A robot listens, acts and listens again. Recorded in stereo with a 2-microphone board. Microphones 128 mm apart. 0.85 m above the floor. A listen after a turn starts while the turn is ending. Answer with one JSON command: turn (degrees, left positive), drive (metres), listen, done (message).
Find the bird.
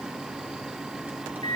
{"listen": true}
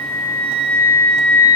{"listen": true}
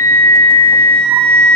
{"done": "I can't make out a bird, only a flute."}